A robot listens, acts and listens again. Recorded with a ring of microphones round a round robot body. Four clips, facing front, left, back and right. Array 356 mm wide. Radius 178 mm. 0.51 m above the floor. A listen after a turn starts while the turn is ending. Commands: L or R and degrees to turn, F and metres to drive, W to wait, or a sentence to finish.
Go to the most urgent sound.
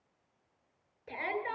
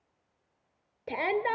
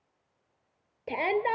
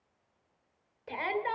L140
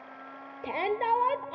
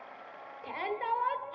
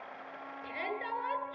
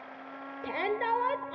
R35
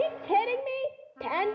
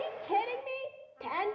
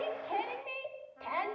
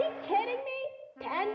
F1.0
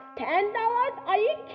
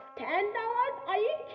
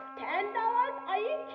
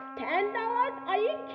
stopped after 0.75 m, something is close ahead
Arrived at the shout, straight ahead.